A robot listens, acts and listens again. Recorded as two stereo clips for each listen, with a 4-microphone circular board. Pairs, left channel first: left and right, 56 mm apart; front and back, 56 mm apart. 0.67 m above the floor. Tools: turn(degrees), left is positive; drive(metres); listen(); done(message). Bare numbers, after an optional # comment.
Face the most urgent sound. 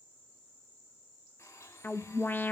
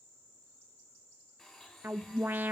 # The alarm: 130° left.
turn(130)
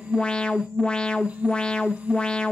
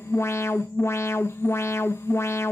# The alarm is now 20° left.
turn(20)
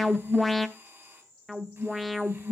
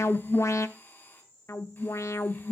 done("Found it: an alarm, straight ahead, under 1 m away.")